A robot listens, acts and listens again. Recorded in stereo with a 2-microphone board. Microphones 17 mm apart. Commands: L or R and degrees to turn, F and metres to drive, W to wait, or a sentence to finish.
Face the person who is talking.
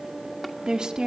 R50
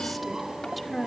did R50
Facing the woman speaking.